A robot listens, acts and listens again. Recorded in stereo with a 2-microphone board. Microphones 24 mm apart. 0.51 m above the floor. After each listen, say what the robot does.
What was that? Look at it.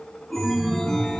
Turn 30° left.
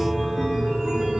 Turn 25° right.
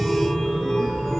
Found it: a chime, straight ahead, 2 to 4 m away.